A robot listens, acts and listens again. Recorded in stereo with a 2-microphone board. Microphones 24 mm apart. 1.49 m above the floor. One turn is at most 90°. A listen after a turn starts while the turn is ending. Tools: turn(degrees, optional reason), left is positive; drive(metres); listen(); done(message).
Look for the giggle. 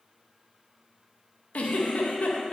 turn(degrees=90)
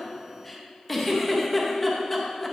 done("Found it: a giggle, straight ahead.")